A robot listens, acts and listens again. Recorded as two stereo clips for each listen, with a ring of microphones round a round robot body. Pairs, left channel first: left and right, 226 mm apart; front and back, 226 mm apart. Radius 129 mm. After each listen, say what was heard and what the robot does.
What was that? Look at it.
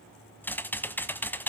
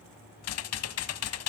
The typing on a keyboard: 10° left. Turn 10° left.
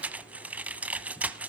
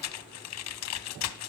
Facing the typing on a keyboard.